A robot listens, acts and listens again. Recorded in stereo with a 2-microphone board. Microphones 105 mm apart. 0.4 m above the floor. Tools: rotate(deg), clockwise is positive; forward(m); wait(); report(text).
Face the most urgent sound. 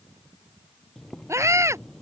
rotate(25)
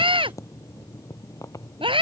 rotate(130)
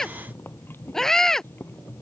report("Found it: a scream, straight ahead.")